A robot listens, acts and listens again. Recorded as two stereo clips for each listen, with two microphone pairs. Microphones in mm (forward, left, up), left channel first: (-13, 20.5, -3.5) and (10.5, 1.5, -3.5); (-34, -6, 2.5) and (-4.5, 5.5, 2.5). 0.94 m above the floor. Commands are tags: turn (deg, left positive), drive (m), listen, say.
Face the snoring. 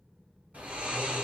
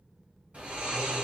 <turn deg="-15"/>
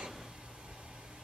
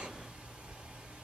<say>Facing the snoring, 2 to 4 m away.</say>